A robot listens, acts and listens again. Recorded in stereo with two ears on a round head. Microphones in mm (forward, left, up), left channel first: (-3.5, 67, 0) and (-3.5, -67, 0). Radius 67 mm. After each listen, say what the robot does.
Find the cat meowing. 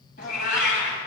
Turn 65° left.
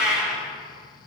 Turn 10° right.
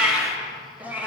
Turn 10° right.
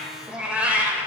Turn 15° right.
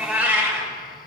Turn 15° right.
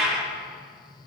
Facing the cat meowing.